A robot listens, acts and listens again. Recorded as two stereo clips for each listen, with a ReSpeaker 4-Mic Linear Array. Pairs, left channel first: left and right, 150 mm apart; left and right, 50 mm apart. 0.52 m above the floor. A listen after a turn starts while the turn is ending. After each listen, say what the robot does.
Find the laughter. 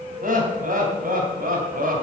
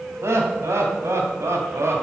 Turn 75° right.
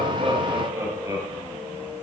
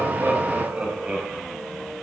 Turn 25° right.
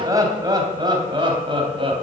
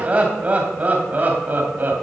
Turn 40° right.
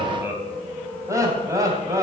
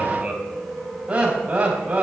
Turn 20° right.
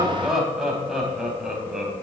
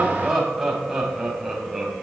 Found it: laughter, straight ahead, 2 to 4 m away.